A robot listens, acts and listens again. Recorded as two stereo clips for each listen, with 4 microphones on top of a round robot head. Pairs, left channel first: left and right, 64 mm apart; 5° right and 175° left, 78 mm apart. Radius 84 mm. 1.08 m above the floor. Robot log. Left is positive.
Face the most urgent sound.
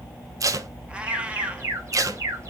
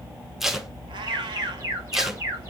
note: The alarm: 135° right.
cmd yaw -135
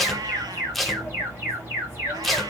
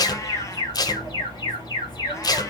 note: The alarm is now 30° right.
cmd yaw -30
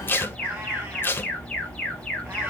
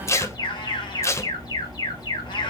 end: Facing the alarm.